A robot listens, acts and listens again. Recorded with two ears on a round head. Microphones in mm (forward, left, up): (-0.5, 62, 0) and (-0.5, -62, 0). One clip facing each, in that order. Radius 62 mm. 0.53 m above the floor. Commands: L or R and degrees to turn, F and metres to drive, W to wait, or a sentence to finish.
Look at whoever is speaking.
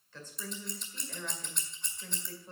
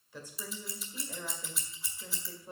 R30
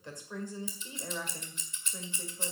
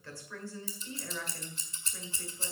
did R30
L20
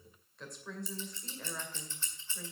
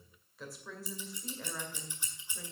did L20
Found it: a woman speaking, straight ahead.